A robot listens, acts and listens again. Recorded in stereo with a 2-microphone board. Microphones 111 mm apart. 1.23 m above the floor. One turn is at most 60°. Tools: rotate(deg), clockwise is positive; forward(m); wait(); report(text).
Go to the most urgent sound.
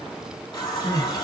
rotate(-50)
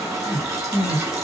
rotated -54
rotate(-60)
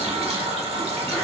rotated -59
rotate(-10)
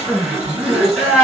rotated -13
forward(1.0)
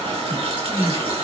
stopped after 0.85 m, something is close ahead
rotate(10)
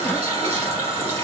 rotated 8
wait()
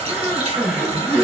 report("Arrived at the crying, straight ahead.")